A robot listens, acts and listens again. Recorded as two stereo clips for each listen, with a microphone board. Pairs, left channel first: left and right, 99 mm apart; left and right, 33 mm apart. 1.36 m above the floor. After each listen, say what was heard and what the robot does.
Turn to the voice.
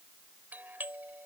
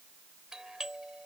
Keep listening.
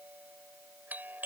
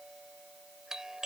Keep listening.
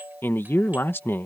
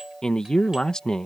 The man speaking: about 20° left or 160° left. Turn 20° left.
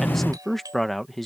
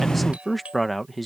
Found it: a man speaking, straight ahead.